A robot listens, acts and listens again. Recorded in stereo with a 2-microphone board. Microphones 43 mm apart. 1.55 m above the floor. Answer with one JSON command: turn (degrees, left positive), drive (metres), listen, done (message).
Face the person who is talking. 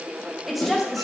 {"turn": 30}
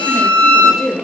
{"turn": -30}
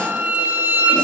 {"listen": true}
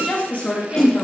{"turn": 40}
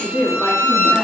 {"turn": 15}
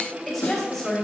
{"done": "Found it: a woman speaking, straight ahead."}